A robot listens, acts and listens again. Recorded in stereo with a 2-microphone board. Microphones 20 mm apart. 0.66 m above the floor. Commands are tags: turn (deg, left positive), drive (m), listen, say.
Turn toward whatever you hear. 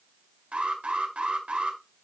<turn deg="-70"/>
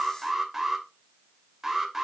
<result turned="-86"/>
<turn deg="-15"/>
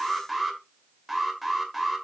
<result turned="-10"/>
<say>Found it: an alarm, straight ahead.</say>